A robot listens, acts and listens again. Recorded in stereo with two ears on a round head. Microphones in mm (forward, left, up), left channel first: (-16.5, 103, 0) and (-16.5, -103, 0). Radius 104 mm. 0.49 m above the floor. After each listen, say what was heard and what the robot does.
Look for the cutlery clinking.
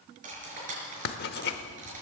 The cutlery clinking: about 35° right or 145° right. Turn 35° right.
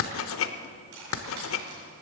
So it is at 110° right. Turn 110° right.
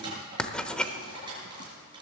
The cutlery clinking is now 20° right. Turn 20° right.
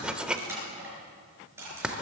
The cutlery clinking is now 10° right. Turn 10° right.
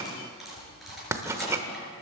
Found it: cutlery clinking, straight ahead, over 4 m away.